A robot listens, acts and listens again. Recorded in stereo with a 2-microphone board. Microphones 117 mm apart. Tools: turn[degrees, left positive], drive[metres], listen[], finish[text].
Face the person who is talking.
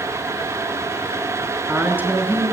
Thought: The woman speaking: about 20° right or 160° right.
Action: turn[-20]
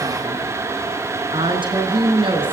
Thought: So it is at 135° right.
Action: turn[-135]
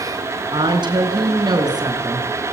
Thought: The woman speaking is now 35° right.
Action: turn[-35]
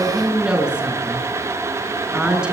Action: finish[Facing the woman speaking, over 4 m away.]